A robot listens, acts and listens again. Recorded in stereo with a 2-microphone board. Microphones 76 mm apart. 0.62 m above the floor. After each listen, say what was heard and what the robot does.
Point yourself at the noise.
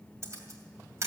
The camera shutter: about 40° right or 140° right. Turn 40° right.
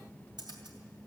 So it is at 95° right. Turn 95° right.
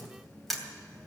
Found it: a camera shutter, straight ahead, 2 to 4 m away.